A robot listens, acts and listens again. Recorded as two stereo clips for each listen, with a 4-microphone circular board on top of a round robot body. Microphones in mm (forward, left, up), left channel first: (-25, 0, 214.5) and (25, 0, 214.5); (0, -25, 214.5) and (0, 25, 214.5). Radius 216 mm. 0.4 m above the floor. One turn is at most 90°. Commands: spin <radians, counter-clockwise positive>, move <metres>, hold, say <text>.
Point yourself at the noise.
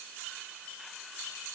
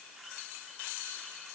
hold
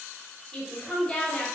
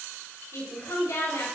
spin -1.57
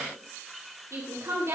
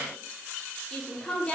spin -0.44
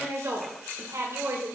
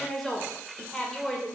spin -0.17
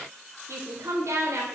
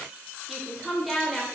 say Found it: a woman speaking, straight ahead, 2 to 4 m away.